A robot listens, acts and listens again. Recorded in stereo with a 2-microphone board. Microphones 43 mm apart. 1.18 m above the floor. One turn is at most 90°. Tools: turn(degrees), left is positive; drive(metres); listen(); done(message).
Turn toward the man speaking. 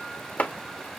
listen()
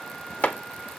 listen()
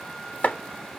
done("I can't make out a man speaking to turn to.")